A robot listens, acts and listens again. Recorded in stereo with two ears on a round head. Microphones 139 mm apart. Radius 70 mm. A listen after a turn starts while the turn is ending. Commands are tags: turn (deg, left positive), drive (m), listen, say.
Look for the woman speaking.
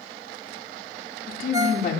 <turn deg="65"/>
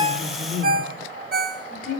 <turn deg="55"/>
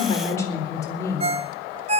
<turn deg="20"/>
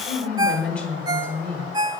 <turn deg="10"/>
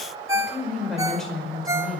<say>Found it: a woman speaking, straight ahead.</say>